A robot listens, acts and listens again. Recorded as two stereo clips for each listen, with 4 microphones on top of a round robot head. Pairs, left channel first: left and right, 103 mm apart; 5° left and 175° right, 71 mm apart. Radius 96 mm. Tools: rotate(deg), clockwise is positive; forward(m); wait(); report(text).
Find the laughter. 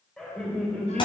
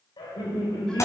rotate(-10)
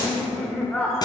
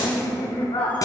rotate(-10)
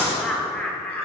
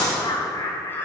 rotate(-15)
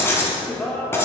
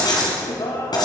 rotate(-20)
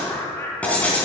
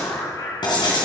rotate(-30)
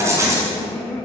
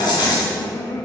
rotate(-20)
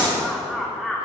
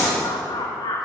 report("Facing the laughter, 1 to 2 m away.")